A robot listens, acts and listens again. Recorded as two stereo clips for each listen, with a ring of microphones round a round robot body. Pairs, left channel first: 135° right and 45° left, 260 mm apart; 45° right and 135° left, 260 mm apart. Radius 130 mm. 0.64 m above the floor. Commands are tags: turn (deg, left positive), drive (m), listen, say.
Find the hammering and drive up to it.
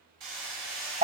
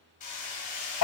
<turn deg="15"/>
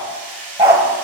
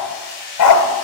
<turn deg="10"/>
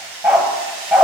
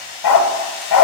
<drive m="1.0"/>
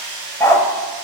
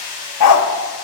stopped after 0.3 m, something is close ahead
<say>Something is in my way. I am facing the hammering but have not reached it.</say>